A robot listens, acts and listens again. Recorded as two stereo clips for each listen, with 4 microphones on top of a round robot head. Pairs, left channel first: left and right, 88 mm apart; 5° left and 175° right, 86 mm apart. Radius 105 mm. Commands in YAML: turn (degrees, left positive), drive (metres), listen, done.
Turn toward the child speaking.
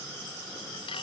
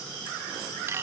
listen: true
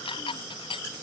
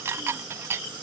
listen: true
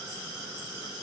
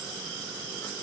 done: "I can't make out a child speaking to turn to."